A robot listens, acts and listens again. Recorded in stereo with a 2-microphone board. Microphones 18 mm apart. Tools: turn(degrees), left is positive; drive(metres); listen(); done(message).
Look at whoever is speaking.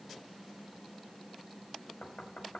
listen()
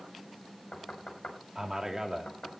turn(degrees=-25)
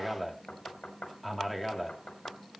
done("Found it: a man speaking, straight ahead.")